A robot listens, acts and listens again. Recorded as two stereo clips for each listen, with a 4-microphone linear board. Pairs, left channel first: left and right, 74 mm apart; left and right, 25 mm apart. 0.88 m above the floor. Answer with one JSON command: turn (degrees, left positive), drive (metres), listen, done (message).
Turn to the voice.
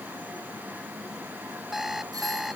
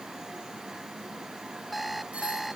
{"listen": true}
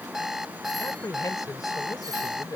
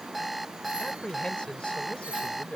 {"turn": 55}
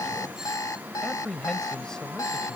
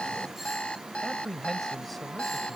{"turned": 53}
{"turn": 10}
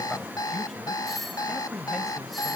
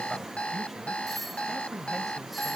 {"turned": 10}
{"done": "Facing the man speaking."}